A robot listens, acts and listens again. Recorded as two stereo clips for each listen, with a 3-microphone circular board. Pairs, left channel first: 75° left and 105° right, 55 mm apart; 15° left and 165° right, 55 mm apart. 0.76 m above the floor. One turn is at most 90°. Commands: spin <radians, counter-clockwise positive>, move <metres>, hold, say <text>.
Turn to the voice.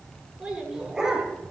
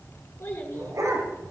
spin -0.44
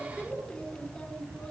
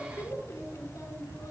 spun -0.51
say Found it: a child speaking, straight ahead, over 4 m away.